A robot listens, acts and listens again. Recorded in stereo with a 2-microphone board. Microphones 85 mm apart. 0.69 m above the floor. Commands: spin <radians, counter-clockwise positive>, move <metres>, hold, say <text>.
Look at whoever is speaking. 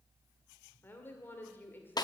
spin 0.44
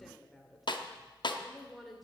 say Facing the woman speaking.